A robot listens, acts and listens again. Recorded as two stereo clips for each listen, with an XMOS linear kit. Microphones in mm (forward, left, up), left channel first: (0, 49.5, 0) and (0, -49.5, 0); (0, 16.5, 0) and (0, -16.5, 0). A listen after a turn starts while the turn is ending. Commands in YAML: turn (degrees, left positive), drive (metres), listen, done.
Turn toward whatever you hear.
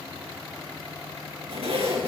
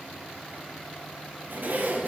turn: -90
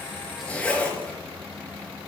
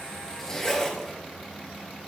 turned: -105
turn: 15
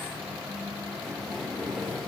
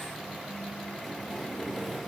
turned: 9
done: "Facing the zipper, 2 to 4 m away."